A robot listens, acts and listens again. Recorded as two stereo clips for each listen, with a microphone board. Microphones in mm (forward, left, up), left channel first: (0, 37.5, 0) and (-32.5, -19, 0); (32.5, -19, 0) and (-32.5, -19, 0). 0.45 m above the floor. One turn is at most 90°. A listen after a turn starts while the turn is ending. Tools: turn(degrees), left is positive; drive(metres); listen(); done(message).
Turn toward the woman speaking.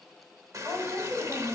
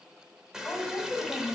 turn(degrees=-75)
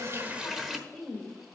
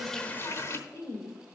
turn(degrees=-25)
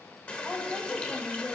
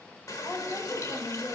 turn(degrees=-20)
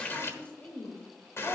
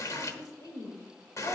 turn(degrees=-10)
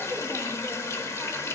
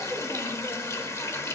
listen()
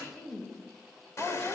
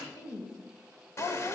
turn(degrees=-10)
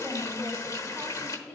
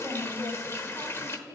done("Facing the woman speaking.")